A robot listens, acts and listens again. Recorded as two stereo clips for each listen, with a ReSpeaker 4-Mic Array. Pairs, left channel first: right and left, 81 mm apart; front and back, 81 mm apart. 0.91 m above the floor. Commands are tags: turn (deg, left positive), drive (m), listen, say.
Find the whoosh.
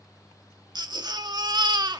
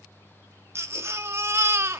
<listen/>
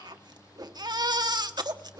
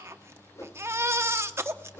<turn deg="50"/>
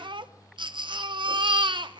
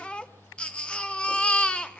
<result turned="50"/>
<listen/>
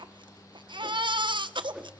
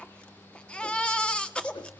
<listen/>
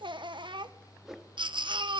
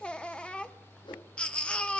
<say>Facing the whoosh, 1 to 2 m away.</say>